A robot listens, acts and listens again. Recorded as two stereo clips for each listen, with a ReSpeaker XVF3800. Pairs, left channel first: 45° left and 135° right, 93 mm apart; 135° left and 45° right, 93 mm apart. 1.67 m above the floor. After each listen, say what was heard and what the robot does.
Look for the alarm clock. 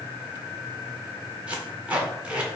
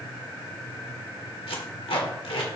Keep listening.
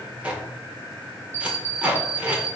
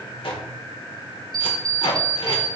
The alarm clock: 65° right. Turn 65° right.
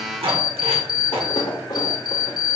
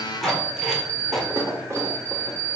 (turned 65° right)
The alarm clock is now 10° left. Turn 10° left.
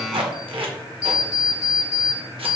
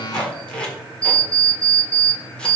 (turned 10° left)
Found it: an alarm clock, straight ahead.